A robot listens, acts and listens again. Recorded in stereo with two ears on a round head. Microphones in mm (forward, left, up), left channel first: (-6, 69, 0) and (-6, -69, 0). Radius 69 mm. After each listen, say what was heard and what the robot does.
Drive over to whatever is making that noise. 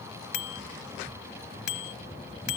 Turn 90° left.
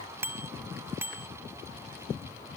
So it is at 15° right. Turn 15° right.
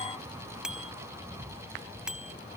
Drive 1.0 m forward.
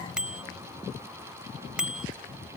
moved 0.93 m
Drive 1.0 m forward.
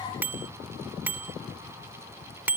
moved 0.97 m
The bicycle bell is now 15° right. Turn 15° right.
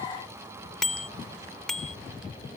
Drive 1.0 m forward.
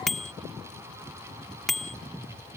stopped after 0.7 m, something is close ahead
Arrived at the bicycle bell, straight ahead.